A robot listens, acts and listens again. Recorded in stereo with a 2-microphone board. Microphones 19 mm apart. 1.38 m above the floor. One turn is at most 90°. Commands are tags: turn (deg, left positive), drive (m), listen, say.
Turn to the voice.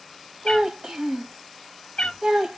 <turn deg="-45"/>
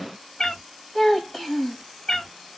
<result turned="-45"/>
<say>Found it: a child speaking, straight ahead.</say>